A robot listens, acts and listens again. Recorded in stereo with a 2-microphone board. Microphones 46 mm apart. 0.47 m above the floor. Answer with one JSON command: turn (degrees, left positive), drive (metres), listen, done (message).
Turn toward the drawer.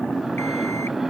{"listen": true}
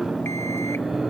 {"listen": true}
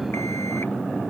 {"done": "I can't make out a drawer to turn to."}